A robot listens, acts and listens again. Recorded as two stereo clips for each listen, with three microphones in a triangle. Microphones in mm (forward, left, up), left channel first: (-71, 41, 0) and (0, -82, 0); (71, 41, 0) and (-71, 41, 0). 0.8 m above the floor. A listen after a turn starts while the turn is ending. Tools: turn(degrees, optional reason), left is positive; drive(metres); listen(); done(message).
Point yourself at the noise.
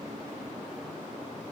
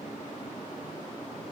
listen()
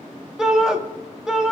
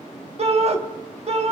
turn(degrees=-145, reason="The shout: 145° right.")
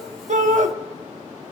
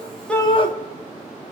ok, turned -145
turn(degrees=-45, reason="The shout is now 45° right.")
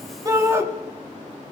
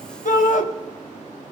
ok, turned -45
turn(degrees=10, reason="The shout is now 10° left.")
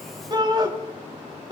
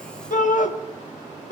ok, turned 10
done("Facing the shout.")